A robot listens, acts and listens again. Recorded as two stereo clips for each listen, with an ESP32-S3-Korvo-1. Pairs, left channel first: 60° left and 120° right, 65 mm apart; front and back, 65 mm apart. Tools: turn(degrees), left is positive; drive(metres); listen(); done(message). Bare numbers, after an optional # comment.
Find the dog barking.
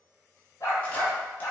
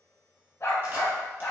# The dog barking: 45° left.
turn(45)
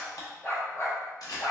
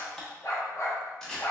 # The dog barking is now 40° left.
turn(40)
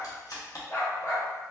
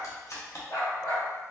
# The dog barking is now 30° left.
turn(30)
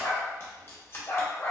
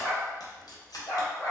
# The dog barking is now 30° left.
turn(30)
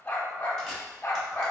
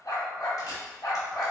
done("Found it: a dog barking, straight ahead.")